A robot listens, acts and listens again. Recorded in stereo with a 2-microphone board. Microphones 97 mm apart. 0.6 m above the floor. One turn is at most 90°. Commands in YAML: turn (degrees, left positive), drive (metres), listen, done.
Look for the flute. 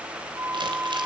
turn: -30
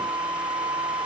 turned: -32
turn: -90
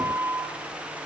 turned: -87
turn: -35
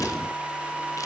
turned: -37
done: "Found it: a flute, straight ahead."